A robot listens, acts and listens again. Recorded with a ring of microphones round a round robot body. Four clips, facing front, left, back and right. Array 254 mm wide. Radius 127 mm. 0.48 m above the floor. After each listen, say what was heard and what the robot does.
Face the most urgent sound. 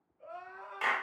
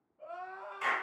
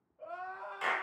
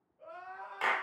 The crying: 165° left. Turn 165° left.
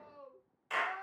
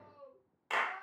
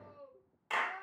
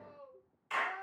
Found it: crying, straight ahead.